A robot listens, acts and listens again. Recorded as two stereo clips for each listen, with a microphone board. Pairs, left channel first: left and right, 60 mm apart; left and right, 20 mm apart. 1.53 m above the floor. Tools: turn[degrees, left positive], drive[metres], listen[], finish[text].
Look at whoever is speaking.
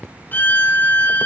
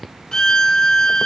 Action: listen[]
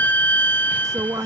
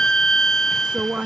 Action: turn[-90]
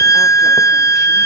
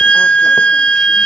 Action: listen[]
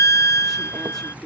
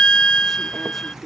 Thought: The woman speaking is now 10° left.
Action: turn[10]
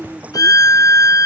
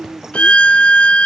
Action: finish[Found it: a woman speaking, straight ahead.]